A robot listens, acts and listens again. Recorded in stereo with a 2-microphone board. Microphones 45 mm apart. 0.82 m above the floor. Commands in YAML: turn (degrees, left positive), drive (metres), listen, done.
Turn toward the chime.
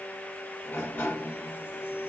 listen: true
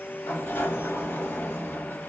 listen: true
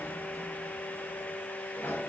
done: "I can't make out a chime to turn to."